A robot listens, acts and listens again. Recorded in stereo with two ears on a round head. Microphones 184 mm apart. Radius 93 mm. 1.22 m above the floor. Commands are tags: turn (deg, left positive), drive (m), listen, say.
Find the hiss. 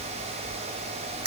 <listen/>
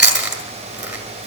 <listen/>
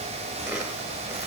<say>I can't make out a hiss, only chewing.</say>